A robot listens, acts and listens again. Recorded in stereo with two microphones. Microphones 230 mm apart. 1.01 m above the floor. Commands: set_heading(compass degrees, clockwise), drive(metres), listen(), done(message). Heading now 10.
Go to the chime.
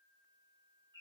listen()
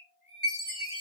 set_heading(280)
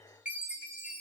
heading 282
drive(1.0)
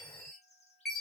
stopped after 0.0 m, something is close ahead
done("Something is in my way. I am facing the chime but have not reached it.")